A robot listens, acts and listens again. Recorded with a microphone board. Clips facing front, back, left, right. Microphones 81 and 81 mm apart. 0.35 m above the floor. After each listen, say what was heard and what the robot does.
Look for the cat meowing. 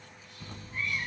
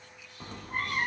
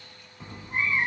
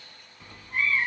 The cat meowing: 160° left. Turn 160° left.
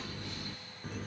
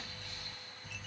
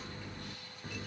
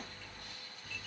The cat meowing is now 35° left. Turn 35° left.
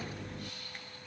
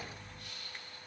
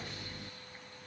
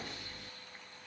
The cat meowing is now 10° left. Turn 10° left.
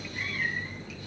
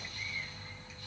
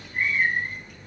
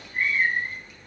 Facing the cat meowing.